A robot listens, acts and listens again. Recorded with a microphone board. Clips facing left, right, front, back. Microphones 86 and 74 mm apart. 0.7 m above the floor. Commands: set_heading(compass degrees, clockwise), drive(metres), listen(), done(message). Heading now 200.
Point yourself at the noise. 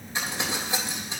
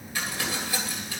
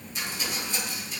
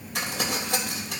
set_heading(45)
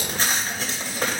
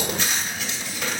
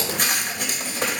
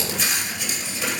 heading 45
set_heading(5)
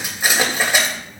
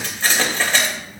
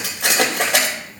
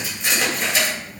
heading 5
set_heading(350)
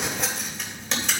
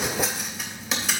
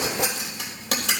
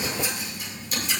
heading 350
done("Found it: crumpling, straight ahead, 2 to 4 m away.")